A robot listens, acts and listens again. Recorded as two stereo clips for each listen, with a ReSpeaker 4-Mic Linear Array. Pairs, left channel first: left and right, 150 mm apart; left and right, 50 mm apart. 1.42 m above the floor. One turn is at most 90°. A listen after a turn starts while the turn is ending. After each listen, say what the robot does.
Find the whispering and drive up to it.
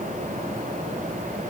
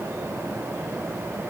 Keep listening.
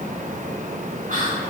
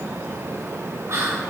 Turn 70° right.
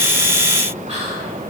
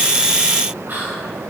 Turn 35° right.
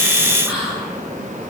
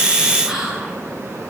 Drive 1.0 m forward.
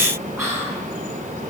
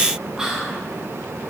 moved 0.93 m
Drive 1.0 m forward.
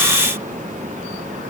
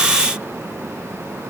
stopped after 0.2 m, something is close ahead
Keep listening.
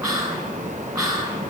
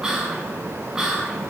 I am next to the whispering.